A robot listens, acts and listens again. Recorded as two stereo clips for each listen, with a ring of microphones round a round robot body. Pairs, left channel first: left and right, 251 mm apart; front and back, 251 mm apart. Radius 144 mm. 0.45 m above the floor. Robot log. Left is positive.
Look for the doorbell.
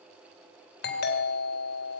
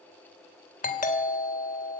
note: The doorbell: 50° left.
cmd yaw +50
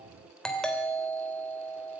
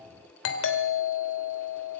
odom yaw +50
end: Facing the doorbell.